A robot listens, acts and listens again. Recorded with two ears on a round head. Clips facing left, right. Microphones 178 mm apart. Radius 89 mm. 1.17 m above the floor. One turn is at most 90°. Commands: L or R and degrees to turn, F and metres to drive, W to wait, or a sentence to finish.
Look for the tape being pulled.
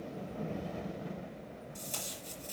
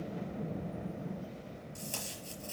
R30
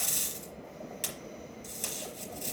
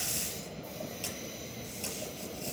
L20
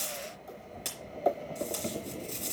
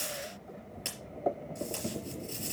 Facing the tape being pulled, over 4 m away.